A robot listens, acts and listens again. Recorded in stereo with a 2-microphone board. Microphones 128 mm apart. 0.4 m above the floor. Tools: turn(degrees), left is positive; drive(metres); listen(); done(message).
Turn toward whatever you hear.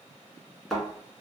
turn(degrees=30)
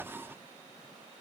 listen()
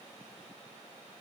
done("I heard a thud, but can't make it out now. It was about 30° right or 150° left.")